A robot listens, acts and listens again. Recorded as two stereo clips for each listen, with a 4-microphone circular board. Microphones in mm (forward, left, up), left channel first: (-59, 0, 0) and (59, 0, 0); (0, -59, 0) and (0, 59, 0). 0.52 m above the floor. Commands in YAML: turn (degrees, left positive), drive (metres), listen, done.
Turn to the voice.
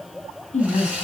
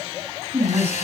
turn: 165
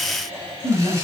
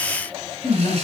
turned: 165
turn: -50
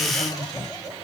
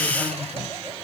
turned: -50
listen: true
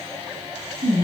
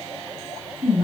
done: "Facing the woman speaking."